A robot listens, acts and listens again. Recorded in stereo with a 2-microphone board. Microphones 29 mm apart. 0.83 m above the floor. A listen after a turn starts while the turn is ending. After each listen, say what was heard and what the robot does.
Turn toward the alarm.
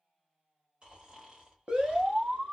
The alarm: about 30° right or 150° right. Turn 30° right.
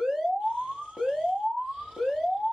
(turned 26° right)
Facing the alarm.